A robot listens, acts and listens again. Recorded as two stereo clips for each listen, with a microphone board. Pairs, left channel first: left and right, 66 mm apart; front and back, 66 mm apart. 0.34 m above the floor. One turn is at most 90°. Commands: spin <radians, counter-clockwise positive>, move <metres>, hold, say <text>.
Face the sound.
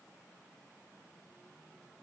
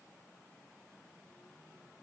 hold
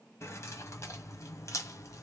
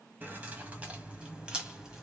spin 1.57
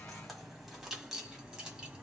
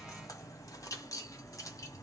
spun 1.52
spin -0.26
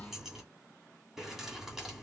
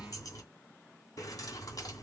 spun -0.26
say Found it: keys jangling, straight ahead, 1 to 2 m away.